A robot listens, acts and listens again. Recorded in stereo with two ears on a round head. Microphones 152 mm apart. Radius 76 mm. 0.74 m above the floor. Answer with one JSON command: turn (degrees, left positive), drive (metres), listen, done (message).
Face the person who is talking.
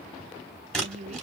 {"turn": -40}
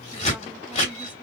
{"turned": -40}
{"listen": true}
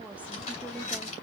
{"listen": true}
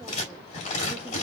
{"done": "I heard a woman speaking, but can't make it out now. It was about straight ahead or 100° right."}